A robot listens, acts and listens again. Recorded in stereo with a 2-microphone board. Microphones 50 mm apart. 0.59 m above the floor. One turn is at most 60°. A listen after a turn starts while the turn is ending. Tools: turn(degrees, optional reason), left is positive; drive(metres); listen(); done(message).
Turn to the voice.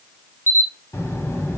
turn(degrees=60, reason="The child speaking: about 65° left or 115° left.")
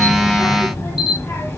turn(degrees=55, reason="So it is at 55° left.")
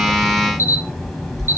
done("Facing the child speaking, 1 to 2 m away.")